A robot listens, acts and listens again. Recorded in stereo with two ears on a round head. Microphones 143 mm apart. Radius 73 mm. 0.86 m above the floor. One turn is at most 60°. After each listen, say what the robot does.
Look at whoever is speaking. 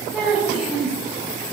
Turn 30° right.
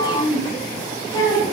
Turn 25° left.
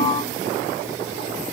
Keep listening.
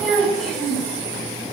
Facing the child speaking, over 4 m away.